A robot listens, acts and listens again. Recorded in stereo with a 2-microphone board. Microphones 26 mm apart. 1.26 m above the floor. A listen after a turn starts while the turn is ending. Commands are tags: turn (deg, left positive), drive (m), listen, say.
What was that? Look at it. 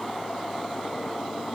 <listen/>
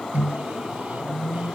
<turn deg="-90"/>
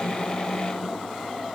<listen/>
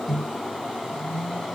<turn deg="-10"/>
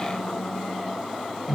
<say>Facing the microwave, 1 to 2 m away.</say>